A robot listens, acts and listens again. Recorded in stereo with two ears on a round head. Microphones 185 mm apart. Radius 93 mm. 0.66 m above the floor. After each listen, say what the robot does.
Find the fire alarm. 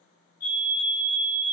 Turn 45° left.
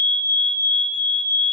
Turn 10° left.
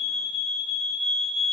Facing the fire alarm.